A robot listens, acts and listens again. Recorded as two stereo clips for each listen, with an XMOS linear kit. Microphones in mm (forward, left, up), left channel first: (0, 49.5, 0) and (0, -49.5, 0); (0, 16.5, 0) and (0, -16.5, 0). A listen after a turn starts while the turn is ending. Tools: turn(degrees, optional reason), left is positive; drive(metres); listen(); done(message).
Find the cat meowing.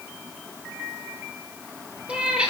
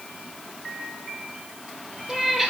turn(degrees=-30)
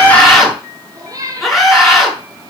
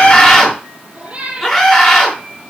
turn(degrees=-145, reason="So it is at 145° right.")
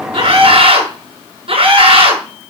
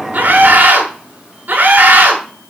listen()
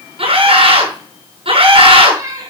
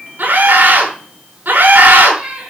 turn(degrees=-35, reason="The cat meowing is now 35° right.")
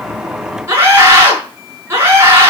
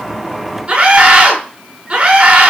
listen()
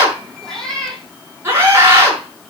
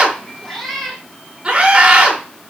done("Facing the cat meowing, 2 to 4 m away.")